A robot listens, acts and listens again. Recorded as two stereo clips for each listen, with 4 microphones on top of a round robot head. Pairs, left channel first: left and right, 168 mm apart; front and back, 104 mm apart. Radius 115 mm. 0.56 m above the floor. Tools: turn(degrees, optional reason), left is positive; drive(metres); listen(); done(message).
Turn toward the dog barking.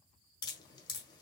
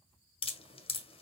listen()
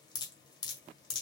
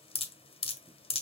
listen()
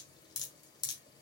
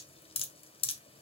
done("I can't make out a dog barking, only dripping.")